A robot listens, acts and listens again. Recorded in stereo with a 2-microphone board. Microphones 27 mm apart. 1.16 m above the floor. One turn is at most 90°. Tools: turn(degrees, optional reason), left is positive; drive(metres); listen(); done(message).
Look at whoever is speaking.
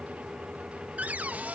listen()
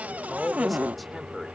turn(degrees=30)
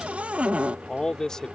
turn(degrees=90, reason="So it is at 155° left.")
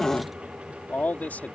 turn(degrees=80, reason="The man speaking is now 80° left.")
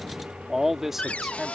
turn(degrees=-10, reason="The man speaking is now 10° right.")
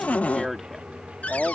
done("Found it: a man speaking, straight ahead.")